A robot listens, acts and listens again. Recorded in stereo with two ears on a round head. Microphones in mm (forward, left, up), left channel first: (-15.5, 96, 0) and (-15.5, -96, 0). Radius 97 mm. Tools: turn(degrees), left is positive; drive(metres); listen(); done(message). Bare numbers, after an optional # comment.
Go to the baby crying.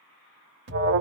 listen()
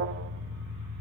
listen()
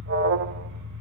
done("I can't make out a baby crying to turn to.")